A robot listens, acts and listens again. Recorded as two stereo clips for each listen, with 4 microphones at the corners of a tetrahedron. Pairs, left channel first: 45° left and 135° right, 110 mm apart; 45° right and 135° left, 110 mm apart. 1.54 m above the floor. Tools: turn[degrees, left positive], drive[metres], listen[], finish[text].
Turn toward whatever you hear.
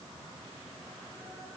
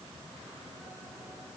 Action: listen[]
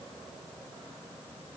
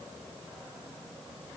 Action: listen[]
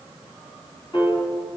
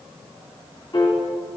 Action: finish[Facing the piano, 2 to 4 m away.]